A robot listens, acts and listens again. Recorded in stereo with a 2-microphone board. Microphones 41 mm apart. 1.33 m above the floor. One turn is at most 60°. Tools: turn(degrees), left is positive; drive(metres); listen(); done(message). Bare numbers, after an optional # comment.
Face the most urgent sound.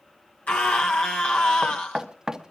# The scream: about 35° left or 145° left.
turn(35)
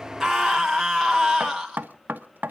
done("Found it: a scream, straight ahead.")